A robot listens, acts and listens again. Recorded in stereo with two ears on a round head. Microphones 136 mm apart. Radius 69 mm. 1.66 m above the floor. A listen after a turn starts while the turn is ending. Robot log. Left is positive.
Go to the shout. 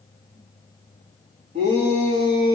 note: The shout: about 50° right or 130° right.
cmd yaw -50
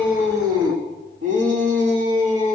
note: So it is at 80° right.
cmd yaw -80
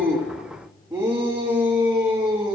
note: The shout is now 15° right.
cmd yaw -15
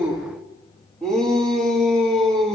cmd fwd 1.0
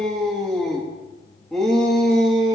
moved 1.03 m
cmd fwd 1.0
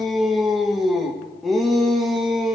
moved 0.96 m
cmd fwd 1.0
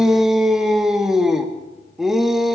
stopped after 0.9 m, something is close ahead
end: Arrived at the shout, straight ahead.